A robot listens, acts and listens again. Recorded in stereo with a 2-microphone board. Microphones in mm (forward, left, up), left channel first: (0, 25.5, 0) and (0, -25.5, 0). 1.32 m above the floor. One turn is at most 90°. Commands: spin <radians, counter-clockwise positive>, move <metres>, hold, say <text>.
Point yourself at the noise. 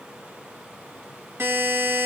spin -0.87
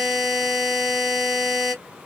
spin -0.17
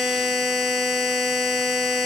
say Found it: a buzzer, straight ahead, 1 to 2 m away.